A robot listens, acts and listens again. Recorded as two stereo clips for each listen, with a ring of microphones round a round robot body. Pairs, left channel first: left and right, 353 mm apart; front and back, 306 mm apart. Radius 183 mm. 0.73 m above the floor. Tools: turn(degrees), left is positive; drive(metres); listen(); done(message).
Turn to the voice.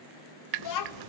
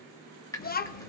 turn(degrees=60)
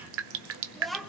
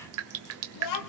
done("Found it: a child speaking, straight ahead, 1 to 2 m away.")